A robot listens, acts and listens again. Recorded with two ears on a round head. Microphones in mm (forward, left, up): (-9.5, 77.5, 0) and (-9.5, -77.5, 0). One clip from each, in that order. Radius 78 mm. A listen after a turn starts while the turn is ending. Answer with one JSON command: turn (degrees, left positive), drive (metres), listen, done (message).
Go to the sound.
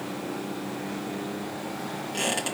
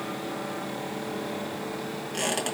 {"turn": -30}
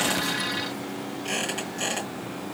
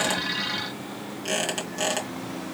{"turn": -150}
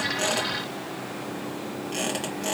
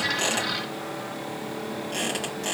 {"drive": 1.0}
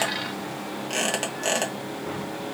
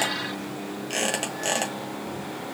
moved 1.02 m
{"drive": 1.0}
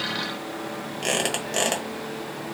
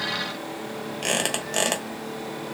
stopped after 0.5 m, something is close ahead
{"done": "Arrived at the squeak, straight ahead."}